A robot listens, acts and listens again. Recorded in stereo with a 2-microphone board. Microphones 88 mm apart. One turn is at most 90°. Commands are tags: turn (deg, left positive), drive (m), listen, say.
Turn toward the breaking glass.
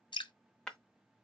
<turn deg="30"/>
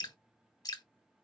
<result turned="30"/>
<listen/>
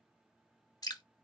<say>I heard breaking glass, but can't make it out now. It was about 20° right or 140° left.</say>